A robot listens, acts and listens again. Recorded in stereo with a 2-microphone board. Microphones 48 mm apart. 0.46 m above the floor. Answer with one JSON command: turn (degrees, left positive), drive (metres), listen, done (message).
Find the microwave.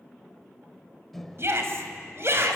{"turn": 30}
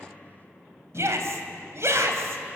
{"listen": true}
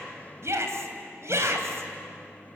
{"listen": true}
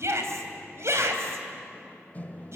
{"turn": 140}
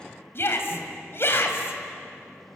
{"listen": true}
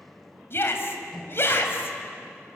{"done": "Facing the microwave."}